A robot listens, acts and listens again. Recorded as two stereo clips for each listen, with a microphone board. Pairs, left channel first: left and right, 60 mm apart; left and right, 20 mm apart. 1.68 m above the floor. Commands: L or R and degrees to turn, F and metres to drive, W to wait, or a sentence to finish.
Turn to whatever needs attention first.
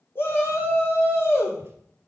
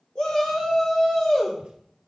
L35
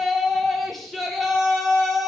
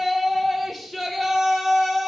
Facing the shout, 2 to 4 m away.